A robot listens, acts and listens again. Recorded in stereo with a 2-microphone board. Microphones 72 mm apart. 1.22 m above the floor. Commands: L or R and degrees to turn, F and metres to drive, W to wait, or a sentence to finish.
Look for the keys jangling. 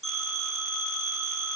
W
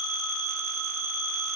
W
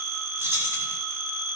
R35
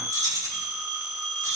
R130
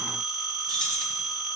L10
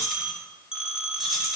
Found it: keys jangling, straight ahead, 2 to 4 m away.